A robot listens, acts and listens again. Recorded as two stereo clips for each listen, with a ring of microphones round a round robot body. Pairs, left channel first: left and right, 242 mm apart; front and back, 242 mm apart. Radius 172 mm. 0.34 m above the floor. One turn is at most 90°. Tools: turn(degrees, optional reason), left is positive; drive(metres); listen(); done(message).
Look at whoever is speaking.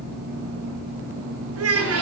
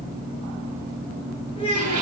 turn(degrees=-75, reason="The child speaking: 75° right.")
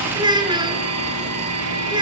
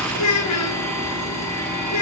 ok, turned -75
turn(degrees=-20, reason="The child speaking is now 20° right.")
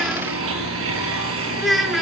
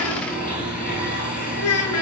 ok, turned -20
done("Facing the child speaking, over 4 m away.")